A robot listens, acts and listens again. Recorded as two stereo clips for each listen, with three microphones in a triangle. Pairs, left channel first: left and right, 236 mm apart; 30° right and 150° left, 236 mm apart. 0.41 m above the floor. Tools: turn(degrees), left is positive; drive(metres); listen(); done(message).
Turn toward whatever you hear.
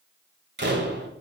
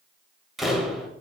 turn(degrees=-120)
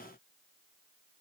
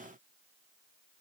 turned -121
done("Facing where the door slam came from. I can't hear it now.")